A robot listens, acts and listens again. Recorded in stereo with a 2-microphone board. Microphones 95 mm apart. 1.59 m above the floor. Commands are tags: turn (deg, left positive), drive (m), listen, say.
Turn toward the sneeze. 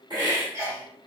<turn deg="-30"/>
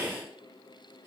<listen/>
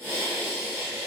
<say>I heard a sneeze, but can't make it out now. It was about straight ahead or 120° right.</say>